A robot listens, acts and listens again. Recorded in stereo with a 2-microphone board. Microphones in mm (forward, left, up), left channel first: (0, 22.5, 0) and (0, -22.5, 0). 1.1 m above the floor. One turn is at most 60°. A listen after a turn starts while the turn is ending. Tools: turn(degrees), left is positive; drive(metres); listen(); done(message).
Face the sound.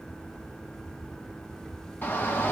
turn(degrees=50)
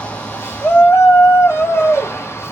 turn(degrees=60)
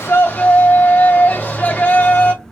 turn(degrees=40)
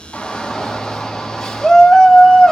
turn(degrees=10)
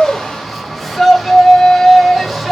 done("Found it: a shout, straight ahead.")